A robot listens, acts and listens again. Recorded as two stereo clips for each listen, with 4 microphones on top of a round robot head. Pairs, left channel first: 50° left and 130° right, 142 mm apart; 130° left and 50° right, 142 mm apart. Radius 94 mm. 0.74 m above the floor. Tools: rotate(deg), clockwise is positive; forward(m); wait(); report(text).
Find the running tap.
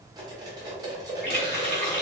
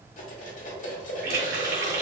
rotate(30)
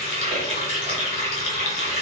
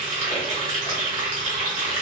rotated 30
report("Facing the running tap.")